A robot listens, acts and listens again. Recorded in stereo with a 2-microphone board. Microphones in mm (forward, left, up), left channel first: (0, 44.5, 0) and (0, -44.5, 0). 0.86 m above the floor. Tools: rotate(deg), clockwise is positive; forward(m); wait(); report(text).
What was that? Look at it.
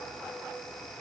wait()
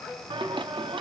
rotate(70)
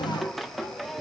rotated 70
report("Found it: singing, straight ahead, under 1 m away.")